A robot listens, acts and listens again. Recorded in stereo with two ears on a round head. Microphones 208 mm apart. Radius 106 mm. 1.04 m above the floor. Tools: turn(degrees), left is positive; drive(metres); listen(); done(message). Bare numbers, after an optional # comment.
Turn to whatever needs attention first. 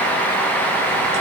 listen()
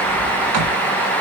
listen()
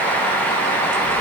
done("I can't make out anything urgent to turn to.")